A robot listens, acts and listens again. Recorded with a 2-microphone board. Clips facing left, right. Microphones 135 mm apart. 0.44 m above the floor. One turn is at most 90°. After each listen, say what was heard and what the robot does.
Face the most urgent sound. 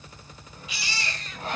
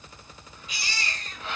The baby crying: about 45° right or 135° right. Turn 45° right.
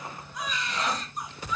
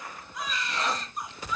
Facing the baby crying, 2 to 4 m away.